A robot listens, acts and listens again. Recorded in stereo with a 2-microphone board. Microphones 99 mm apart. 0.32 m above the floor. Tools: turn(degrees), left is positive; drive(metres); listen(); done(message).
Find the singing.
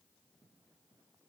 listen()
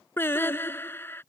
turn(degrees=20)
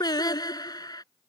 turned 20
turn(degrees=135)
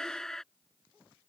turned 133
done("Facing the singing.")